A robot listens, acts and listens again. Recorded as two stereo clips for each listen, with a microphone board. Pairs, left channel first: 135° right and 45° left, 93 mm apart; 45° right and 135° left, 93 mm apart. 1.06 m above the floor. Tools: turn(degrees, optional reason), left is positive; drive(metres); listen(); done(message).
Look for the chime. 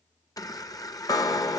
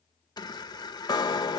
turn(degrees=-85, reason="The chime: 85° right.")
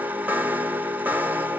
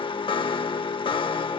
turn(degrees=-25, reason="The chime is now 25° right.")
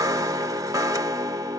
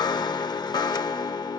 done("Facing the chime, under 1 m away.")